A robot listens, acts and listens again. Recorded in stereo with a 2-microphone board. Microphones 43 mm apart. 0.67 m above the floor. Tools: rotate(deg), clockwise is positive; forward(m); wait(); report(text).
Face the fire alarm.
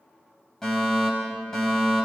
rotate(-30)
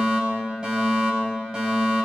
rotate(20)
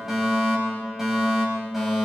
report("Facing the fire alarm, over 4 m away.")